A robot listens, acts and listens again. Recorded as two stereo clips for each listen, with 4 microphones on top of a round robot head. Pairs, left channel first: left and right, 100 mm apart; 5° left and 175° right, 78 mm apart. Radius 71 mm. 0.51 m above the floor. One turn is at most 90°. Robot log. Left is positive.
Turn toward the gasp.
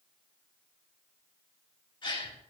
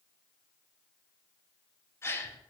note: The gasp: 55° left.
cmd yaw +55
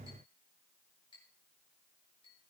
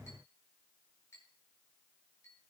end: I heard a gasp from this way, but can't make it out now.